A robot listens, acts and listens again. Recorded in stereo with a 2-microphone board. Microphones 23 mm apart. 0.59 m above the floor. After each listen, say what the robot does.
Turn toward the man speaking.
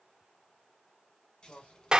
Turn 70° left.
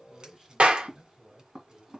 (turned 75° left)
Facing the man speaking.